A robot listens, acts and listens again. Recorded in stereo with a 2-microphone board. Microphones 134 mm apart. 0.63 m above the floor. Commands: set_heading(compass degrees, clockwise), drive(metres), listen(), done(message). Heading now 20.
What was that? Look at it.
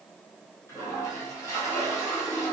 set_heading(355)
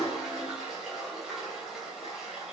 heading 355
done("Found it: a toilet flushing, straight ahead, 2 to 4 m away.")